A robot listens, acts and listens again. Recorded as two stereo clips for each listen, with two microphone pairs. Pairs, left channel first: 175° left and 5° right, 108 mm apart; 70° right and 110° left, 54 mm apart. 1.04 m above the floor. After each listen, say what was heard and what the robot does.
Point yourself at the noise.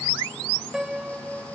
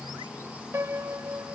The piano: 80° left. Turn 80° left.
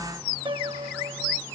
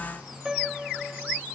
The piano is now 30° left. Turn 30° left.
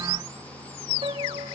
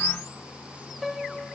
The piano is now 25° left. Turn 25° left.
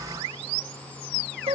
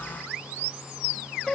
The piano is now 10° left. Turn 10° left.
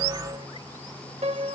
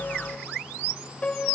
Found it: a piano, straight ahead.